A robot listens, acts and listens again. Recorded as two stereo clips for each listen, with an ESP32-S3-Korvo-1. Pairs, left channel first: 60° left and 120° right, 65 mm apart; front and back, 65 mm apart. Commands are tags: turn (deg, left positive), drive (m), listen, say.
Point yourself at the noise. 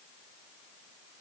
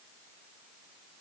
<listen/>
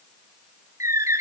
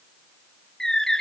<turn deg="-80"/>
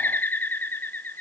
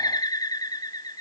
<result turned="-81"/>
<say>Facing the bird.</say>